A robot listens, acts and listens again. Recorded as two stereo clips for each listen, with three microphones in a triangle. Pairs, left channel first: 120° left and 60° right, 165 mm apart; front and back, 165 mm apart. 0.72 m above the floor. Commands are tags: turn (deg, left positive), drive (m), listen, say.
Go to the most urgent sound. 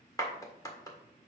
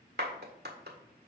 <listen/>
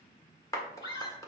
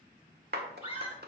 <turn deg="55"/>
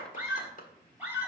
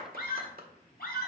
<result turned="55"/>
<turn deg="20"/>
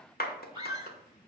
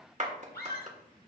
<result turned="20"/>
<drive m="1.0"/>
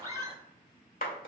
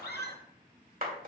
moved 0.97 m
<drive m="1.0"/>
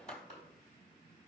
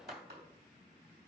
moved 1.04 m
<listen/>
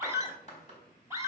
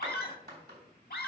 <turn deg="10"/>
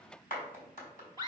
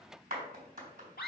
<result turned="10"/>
<drive m="1.0"/>
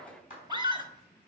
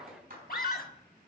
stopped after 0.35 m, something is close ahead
<say>I am next to the scream.</say>